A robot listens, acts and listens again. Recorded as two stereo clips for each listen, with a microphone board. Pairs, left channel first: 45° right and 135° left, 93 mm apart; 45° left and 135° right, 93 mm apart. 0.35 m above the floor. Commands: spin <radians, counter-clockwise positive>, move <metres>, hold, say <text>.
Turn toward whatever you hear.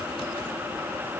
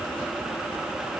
hold
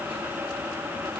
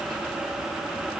hold
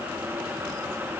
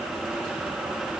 say I can't make out anything to turn to.